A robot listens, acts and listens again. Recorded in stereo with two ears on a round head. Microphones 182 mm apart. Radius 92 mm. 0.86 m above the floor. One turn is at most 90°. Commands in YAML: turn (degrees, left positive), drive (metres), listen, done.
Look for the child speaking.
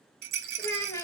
turn: 15
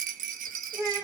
turn: -15
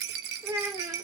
turn: -20
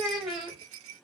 turn: -15
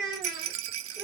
turn: -15
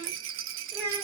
turn: -10
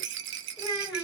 done: "Found it: a child speaking, straight ahead."